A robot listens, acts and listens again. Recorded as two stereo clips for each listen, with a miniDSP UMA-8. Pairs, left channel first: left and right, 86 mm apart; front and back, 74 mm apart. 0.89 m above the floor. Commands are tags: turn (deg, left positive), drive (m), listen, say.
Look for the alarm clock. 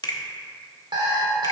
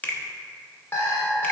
<turn deg="-55"/>
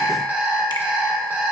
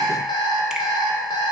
<turn deg="-20"/>
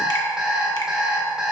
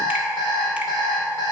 <say>Facing the alarm clock, 1 to 2 m away.</say>